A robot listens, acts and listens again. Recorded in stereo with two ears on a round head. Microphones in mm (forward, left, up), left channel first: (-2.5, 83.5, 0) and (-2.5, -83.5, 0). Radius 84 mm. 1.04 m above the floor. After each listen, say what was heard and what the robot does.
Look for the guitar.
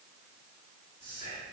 Keep listening.
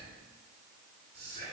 Keep listening.
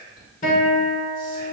The guitar: about 45° left or 135° left. Turn 45° left.
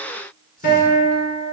So it is at 80° left. Turn 80° left.
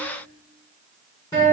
The guitar is now 25° left. Turn 25° left.
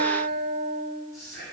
The guitar is now 10° left. Turn 10° left.
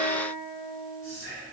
Facing the guitar, 1 to 2 m away.